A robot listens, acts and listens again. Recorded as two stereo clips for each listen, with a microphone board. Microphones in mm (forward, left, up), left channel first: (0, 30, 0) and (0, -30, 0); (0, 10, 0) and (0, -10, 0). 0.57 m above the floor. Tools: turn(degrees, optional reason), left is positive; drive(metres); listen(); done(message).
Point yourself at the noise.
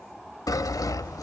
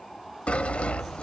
turn(degrees=90)
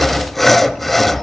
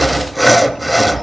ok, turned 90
done("Found it: sawing, straight ahead, under 1 m away.")